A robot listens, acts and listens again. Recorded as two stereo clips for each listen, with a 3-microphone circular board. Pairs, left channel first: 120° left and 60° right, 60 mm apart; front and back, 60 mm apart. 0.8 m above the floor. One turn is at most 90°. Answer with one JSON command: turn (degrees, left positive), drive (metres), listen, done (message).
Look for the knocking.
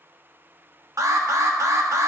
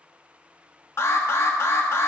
{"listen": true}
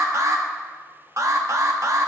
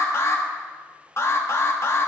{"listen": true}
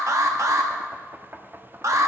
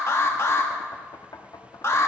{"done": "Facing the knocking, under 1 m away."}